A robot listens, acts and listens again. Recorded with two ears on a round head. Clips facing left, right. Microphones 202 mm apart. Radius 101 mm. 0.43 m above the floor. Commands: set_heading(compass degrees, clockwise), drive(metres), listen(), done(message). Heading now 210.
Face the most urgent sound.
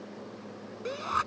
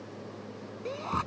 set_heading(190)
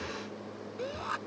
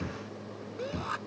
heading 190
done("Facing the shout.")